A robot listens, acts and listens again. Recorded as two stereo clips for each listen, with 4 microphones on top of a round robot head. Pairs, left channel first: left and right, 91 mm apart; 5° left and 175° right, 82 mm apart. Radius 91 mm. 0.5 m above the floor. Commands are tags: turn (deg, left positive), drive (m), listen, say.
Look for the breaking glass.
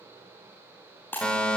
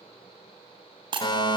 <turn deg="165"/>
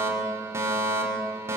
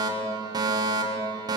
<say>Facing where the breaking glass came from. I can't hear it now.</say>